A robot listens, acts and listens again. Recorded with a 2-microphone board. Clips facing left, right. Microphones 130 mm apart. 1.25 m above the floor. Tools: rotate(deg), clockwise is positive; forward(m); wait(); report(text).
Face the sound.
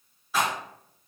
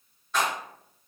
rotate(-30)
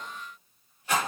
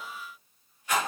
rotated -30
rotate(-145)
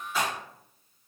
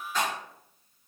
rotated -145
report("Facing the rattle, 1 to 2 m away.")